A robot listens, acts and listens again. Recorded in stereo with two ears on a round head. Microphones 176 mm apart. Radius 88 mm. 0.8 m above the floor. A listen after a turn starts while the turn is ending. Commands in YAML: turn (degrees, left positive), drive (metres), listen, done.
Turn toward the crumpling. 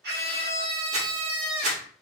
turn: -35
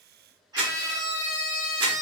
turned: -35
turn: -100
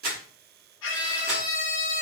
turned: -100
listen: true
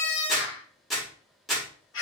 done: "Found it: crumpling, straight ahead."